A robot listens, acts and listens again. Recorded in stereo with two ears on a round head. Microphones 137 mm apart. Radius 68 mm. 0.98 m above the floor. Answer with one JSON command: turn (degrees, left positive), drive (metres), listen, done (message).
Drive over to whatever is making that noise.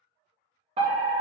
{"turn": -40}
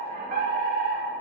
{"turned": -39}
{"turn": -90}
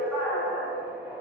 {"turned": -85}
{"drive": 1.0}
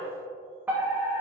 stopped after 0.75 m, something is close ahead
{"turn": -20}
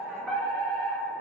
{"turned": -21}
{"done": "I am next to the fire alarm."}